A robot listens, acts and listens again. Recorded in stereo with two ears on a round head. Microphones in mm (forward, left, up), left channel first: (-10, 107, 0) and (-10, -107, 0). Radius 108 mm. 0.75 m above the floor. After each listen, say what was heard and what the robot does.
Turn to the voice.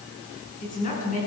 The woman speaking: about 35° left or 145° left. Turn 35° left.
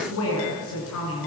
So it is at 115° left. Turn 115° left.
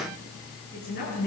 The woman speaking is now 40° left. Turn 40° left.
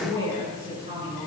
The woman speaking is now 20° right. Turn 20° right.
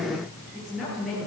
Facing the woman speaking, over 4 m away.